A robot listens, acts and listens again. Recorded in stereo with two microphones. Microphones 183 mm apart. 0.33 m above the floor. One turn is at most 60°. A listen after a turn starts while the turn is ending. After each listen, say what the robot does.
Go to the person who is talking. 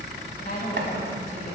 Turn 50° left.
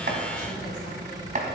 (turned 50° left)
Keep listening.
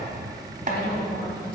Turn 60° left.
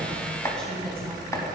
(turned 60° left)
Turn 10° left.
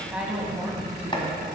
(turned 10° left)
Drive 1.0 m forward.
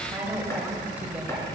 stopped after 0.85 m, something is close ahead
Turn 10° right.
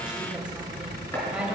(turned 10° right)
Turn 10° right.
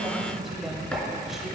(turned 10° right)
Arrived at the woman speaking, straight ahead.